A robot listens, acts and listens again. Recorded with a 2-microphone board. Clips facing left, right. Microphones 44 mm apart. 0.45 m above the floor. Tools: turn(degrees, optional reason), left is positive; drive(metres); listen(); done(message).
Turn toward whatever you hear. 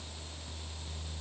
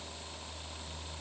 listen()
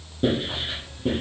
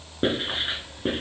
turn(degrees=-45, reason="The writing: about 45° right or 135° right.")
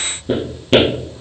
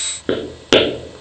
turn(degrees=-90, reason="So it is at 90° right.")
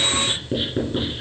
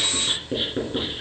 done("Found it: writing, straight ahead, 2 to 4 m away.")